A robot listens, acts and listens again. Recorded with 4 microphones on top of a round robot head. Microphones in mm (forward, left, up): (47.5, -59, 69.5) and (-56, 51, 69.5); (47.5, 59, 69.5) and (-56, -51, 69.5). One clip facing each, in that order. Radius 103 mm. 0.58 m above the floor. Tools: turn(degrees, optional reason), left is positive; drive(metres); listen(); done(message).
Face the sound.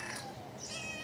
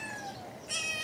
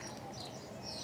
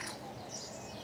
listen()
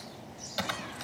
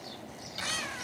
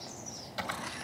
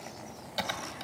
turn(degrees=-70, reason="The typing on a keyboard: 70° right.")
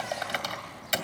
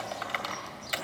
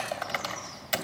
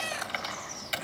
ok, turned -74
done("Found it: typing on a keyboard, straight ahead.")